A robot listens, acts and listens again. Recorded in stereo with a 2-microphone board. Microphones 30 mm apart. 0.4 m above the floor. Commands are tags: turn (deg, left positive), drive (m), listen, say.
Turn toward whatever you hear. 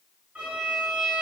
<turn deg="-60"/>
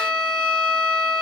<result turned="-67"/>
<turn deg="-30"/>
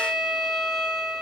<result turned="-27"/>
<say>Facing the violin.</say>